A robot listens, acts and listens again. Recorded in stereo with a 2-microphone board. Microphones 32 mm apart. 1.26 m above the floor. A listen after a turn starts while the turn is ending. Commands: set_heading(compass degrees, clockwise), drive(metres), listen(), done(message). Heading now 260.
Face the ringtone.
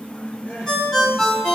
set_heading(230)
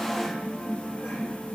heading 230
listen()
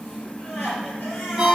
set_heading(245)
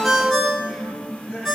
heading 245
done("Found it: a ringtone, straight ahead, 2 to 4 m away.")